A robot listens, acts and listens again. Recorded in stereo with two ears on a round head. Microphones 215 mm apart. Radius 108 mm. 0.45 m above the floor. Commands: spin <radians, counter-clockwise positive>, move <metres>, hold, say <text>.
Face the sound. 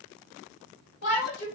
spin 0.87
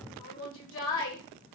spin 1.22
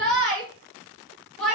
say Found it: a shout, straight ahead.